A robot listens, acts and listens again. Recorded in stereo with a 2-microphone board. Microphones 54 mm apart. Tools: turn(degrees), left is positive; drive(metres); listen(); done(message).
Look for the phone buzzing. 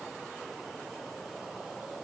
listen()
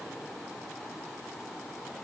listen()
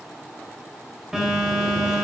turn(degrees=-30)
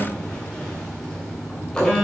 turn(degrees=15)
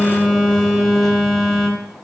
done("Facing the phone buzzing.")